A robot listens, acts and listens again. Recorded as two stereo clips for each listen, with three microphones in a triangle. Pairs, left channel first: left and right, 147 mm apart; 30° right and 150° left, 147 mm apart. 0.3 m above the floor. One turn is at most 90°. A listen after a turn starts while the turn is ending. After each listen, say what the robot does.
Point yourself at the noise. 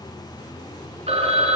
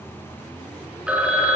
Turn 90° right.
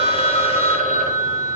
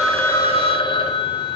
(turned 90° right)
Turn 80° right.
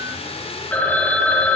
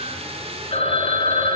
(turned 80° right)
Turn 10° left.
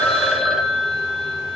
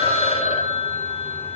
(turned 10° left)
Found it: a phone ringing, straight ahead, 1 to 2 m away.